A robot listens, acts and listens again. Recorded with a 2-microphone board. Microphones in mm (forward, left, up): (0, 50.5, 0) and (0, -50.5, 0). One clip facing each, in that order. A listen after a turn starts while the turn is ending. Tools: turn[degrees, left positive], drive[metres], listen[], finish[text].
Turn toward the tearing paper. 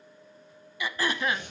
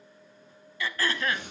Thought: The tearing paper: about 55° right or 125° right.
Action: turn[-55]
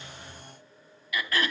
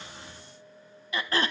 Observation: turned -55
Action: listen[]
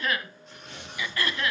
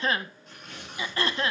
Action: finish[Facing the tearing paper, over 4 m away.]